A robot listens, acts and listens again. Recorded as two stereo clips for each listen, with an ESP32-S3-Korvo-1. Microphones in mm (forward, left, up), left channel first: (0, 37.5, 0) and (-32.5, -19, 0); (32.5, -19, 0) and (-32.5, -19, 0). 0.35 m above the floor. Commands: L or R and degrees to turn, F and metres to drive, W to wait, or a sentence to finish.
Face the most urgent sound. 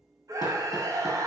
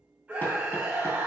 R120
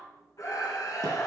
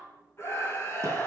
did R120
L40
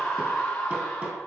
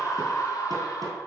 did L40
R15
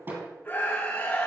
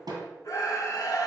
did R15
Facing the scream, 2 to 4 m away.